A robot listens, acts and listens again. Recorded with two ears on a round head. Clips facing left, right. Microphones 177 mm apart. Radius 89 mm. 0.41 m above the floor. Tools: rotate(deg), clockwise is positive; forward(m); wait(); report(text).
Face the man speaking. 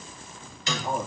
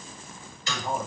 rotate(-30)
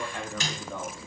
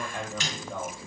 rotate(15)
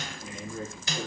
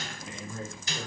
report("Facing the man speaking.")